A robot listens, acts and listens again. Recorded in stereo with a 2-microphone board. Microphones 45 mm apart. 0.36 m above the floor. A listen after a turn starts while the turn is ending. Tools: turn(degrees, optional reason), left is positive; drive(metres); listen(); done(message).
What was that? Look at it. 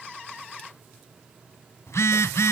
turn(degrees=90)
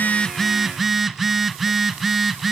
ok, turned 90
done("Facing the phone buzzing, under 1 m away.")